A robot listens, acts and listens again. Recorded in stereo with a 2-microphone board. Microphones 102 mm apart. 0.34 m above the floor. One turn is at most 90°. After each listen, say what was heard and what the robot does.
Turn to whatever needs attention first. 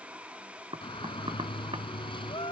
The shout: about 55° left or 125° left. Turn 55° left.
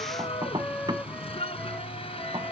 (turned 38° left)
So it is at 85° left. Turn 85° left.
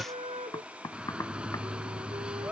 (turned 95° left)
The shout is now 10° right. Turn 10° right.
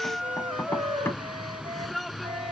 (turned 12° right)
Facing the shout.